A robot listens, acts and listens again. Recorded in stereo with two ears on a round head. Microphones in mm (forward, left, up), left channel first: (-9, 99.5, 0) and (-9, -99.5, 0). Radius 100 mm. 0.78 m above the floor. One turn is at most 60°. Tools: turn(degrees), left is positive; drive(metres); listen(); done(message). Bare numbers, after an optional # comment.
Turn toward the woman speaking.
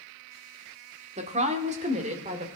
# The woman speaking: about 35° right or 145° right.
turn(-35)
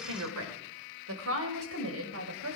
# So it is at 110° right.
turn(-60)
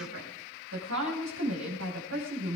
# The woman speaking is now 60° right.
turn(-60)
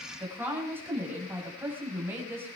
# The woman speaking is now 10° right.
turn(-10)
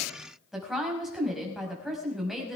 done("Facing the woman speaking, over 4 m away.")